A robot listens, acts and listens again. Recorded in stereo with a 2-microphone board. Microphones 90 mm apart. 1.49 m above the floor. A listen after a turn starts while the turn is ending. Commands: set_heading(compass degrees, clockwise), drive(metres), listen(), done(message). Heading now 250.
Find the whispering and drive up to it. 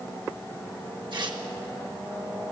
listen()
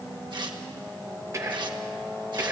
set_heading(285)
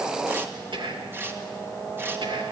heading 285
set_heading(35)
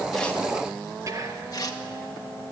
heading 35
set_heading(75)
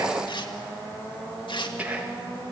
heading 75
set_heading(95)
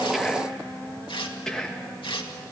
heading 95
drive(1.0)
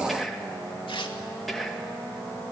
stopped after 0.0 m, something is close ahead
done("Blocked. The whispering is further on, straight ahead.")